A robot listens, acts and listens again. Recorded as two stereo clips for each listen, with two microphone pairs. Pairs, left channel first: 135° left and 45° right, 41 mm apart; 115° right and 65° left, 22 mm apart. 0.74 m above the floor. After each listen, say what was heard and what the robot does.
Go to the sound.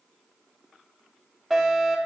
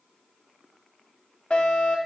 The fire alarm: 140° right. Turn 140° right.
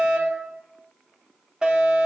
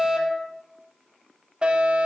The fire alarm is now 25° left. Turn 25° left.
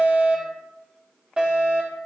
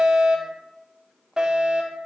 The fire alarm is now 15° left. Turn 15° left.
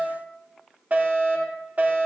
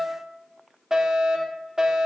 Drive 1.0 m forward.
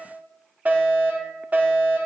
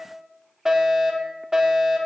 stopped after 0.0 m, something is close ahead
Blocked. The fire alarm is further on, straight ahead.